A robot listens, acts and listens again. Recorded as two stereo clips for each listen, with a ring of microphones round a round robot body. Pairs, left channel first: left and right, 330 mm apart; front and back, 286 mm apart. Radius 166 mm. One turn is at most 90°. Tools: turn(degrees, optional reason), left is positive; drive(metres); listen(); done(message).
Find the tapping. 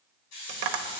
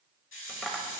turn(degrees=-85, reason="The tapping: 85° right.")
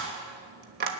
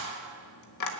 turn(degrees=-30, reason="The tapping is now 30° right.")
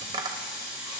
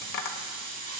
turn(degrees=-15, reason="The tapping is now 15° right.")
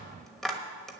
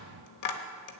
done("Facing the tapping.")